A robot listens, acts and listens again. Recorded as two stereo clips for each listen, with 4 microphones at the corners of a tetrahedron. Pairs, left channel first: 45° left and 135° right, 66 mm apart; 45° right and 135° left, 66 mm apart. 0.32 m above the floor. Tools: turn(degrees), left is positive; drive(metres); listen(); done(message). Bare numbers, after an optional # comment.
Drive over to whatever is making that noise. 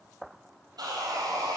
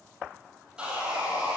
# The sawing: 150° right.
turn(-150)
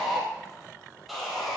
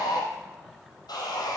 # The sawing is now 45° right.
turn(-45)
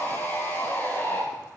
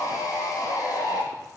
# The sawing is now 15° right.
turn(-15)
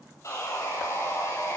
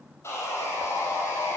drive(1.0)
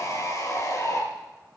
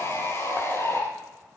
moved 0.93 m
drive(1.0)
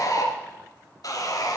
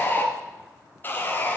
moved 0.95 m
# The sawing is now 15° left.
turn(15)
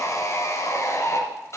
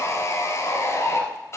drive(1.0)
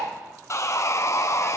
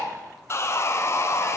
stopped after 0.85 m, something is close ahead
done("I am next to the sawing.")